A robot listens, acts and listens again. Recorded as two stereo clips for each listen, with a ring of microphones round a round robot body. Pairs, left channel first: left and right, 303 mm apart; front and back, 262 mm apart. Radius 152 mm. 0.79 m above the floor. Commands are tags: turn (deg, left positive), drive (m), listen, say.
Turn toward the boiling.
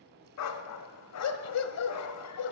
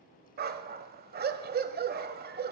<listen/>
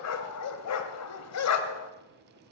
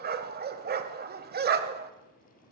<listen/>
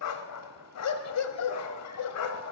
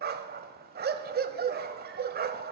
<say>I can't make out boiling, only a dog barking.</say>